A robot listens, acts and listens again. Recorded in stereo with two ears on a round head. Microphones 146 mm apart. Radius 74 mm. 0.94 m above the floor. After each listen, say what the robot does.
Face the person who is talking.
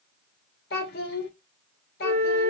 Turn 70° left.
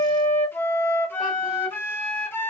Keep listening.
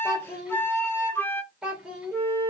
Found it: a child speaking, straight ahead.